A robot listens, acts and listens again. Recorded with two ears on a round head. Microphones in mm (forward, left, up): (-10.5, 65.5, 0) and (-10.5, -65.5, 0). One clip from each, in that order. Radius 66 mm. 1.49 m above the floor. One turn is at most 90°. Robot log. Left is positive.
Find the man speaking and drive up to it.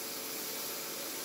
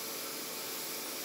cmd idle
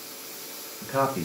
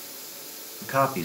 note: The man speaking: about 50° right or 130° right.
cmd yaw -50
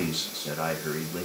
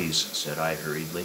note: So it is at 75° right.
cmd yaw -75
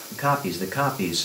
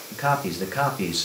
cmd fwd 1.0
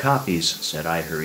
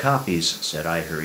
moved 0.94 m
cmd fwd 1.0
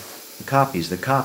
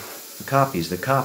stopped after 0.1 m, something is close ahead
end: Arrived at the man speaking, straight ahead.